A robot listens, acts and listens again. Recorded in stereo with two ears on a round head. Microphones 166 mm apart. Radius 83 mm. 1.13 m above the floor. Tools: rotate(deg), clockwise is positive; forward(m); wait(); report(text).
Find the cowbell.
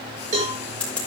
rotate(40)
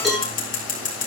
report("Facing the cowbell.")